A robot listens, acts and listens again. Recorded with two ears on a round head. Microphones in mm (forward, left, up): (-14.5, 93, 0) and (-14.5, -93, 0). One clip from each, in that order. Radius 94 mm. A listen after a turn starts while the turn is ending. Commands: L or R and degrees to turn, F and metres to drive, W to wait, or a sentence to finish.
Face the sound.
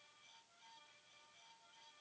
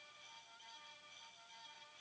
W
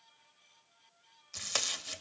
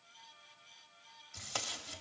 L65
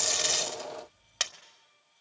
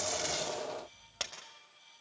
L45
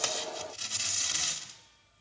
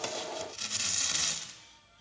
Facing the tape being pulled, 1 to 2 m away.